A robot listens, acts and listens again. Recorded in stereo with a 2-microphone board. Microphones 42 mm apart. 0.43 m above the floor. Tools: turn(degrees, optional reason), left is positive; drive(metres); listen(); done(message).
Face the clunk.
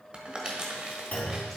turn(degrees=40, reason="The clunk: about 40° left or 140° left.")
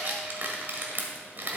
listen()
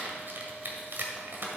done("I heard a clunk, but can't make it out now. It was about straight ahead or 100° left.")